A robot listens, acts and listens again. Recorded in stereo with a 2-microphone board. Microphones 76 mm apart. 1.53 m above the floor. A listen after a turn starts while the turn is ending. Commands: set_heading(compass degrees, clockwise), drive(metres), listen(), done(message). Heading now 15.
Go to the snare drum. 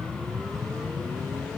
listen()
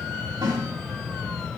set_heading(105)
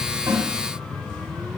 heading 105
listen()
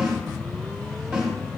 drive(1.0)
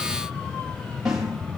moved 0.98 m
set_heading(115)
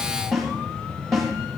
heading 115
drive(1.0)
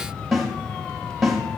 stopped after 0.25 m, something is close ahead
done("Arrived at the snare drum, straight ahead.")